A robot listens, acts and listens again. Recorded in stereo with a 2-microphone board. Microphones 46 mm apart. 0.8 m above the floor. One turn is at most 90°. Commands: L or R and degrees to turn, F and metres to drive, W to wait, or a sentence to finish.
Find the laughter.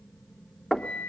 W
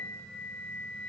W
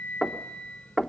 I can't make out laughter, only knocking and a flute.